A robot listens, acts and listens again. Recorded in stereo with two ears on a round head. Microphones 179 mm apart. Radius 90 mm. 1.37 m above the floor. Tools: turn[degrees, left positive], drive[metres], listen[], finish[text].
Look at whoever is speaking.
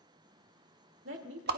Thought: The woman speaking: about 65° right or 115° right.
Action: turn[-65]
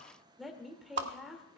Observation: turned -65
Action: finish[Found it: a woman speaking, straight ahead, 2 to 4 m away.]